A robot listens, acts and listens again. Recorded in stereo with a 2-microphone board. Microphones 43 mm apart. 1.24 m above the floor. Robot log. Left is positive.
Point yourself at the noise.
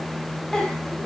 note: The giggle: about 20° left or 160° left.
cmd yaw +20
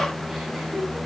cmd idle
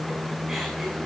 cmd idle
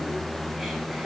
end: Facing the giggle.